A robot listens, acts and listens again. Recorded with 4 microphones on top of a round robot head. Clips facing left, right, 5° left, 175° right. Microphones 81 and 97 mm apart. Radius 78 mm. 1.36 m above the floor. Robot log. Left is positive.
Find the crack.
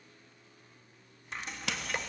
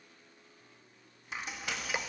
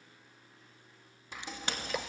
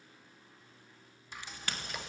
note: The crack: 75° left.
cmd yaw +75
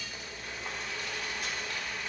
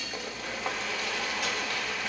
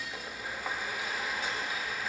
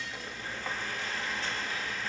end: I heard a crack from this way, but can't make it out now.